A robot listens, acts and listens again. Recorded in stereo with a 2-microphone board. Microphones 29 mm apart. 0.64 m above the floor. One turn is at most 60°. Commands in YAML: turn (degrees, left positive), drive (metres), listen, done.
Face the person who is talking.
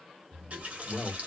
turn: 55
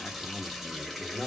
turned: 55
turn: 15
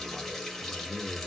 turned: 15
done: "Found it: a man speaking, straight ahead, 1 to 2 m away."